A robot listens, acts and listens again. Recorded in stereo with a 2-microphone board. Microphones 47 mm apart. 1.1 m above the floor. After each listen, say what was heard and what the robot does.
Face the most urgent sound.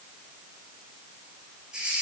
Keep listening.
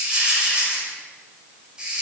Keep listening.
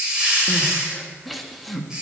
Turn 30° left.
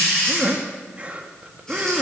So it is at 30° right. Turn 30° right.
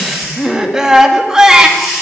The crying is now 15° right. Turn 15° right.
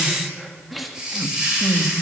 Facing the crying, 1 to 2 m away.